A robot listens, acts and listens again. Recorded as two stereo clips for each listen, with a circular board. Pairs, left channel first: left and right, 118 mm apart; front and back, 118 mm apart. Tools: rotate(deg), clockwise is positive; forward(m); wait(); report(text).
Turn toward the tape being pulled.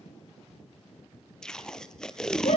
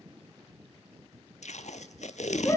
report("Found it: tape being pulled, straight ahead, 1 to 2 m away.")